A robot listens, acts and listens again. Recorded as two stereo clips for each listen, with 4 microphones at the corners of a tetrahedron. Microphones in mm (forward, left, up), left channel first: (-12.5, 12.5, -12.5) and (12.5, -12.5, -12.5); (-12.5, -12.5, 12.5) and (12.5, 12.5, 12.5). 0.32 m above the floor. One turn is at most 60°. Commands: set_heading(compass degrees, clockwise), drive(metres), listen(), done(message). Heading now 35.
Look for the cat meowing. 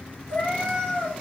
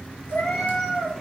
set_heading(95)
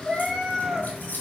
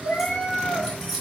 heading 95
set_heading(155)
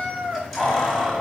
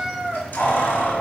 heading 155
set_heading(190)
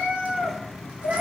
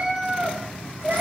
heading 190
done("Facing the cat meowing, 2 to 4 m away.")